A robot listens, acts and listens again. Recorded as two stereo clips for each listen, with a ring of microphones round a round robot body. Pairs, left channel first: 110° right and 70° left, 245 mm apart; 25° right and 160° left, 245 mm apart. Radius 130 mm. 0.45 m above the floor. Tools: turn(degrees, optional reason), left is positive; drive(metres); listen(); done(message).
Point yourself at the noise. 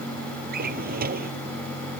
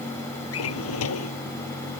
turn(degrees=10, reason="The drawer: 10° left.")
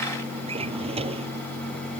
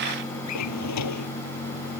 done("Facing the drawer.")